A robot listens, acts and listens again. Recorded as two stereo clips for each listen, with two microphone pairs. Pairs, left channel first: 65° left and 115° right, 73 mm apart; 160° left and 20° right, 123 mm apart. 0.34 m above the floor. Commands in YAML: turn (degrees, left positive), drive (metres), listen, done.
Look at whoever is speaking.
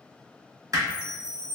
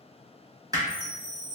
listen: true
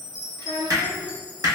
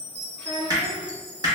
turn: -115
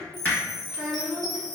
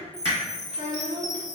turn: -30
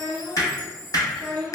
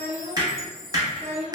done: "Facing the child speaking."